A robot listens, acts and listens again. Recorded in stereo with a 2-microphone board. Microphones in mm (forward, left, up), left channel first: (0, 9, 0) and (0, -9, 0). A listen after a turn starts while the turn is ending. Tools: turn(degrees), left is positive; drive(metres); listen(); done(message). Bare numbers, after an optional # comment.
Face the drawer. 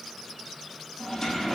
# The drawer: about 25° left or 155° left.
turn(25)
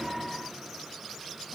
listen()
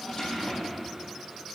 # So it is at 130° left.
turn(130)
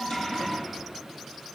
listen()
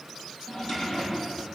# The drawer is now 50° left.
turn(50)
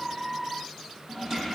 done("Found it: a drawer, straight ahead, over 4 m away.")